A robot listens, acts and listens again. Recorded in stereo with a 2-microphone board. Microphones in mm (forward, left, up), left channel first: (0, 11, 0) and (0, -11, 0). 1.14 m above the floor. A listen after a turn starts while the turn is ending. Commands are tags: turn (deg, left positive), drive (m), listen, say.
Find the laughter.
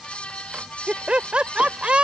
<turn deg="-55"/>
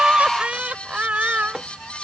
<turn deg="-70"/>
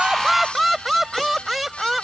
<turn deg="-10"/>
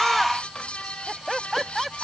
<say>Facing the laughter.</say>